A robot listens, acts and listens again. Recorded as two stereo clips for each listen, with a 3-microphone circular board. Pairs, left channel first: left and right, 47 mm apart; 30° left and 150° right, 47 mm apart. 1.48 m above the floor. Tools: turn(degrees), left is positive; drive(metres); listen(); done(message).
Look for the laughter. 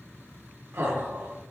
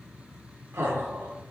turn(degrees=-110)
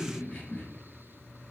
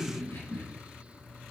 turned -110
turn(degrees=30)
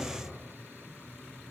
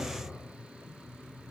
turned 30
turn(degrees=15)
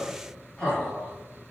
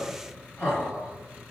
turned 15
turn(degrees=20)
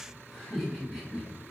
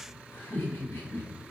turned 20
done("Facing the laughter, 2 to 4 m away.")